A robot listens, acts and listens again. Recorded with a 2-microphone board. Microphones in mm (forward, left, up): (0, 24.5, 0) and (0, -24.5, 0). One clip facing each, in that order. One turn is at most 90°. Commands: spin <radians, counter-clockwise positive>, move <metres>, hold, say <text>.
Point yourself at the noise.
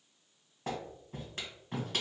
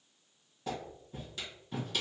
spin 0.70
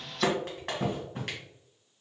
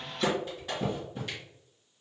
spin 1.57
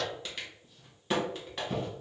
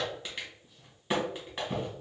spin -0.17
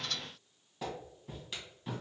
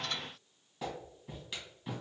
say Found it: a clap, straight ahead, 2 to 4 m away.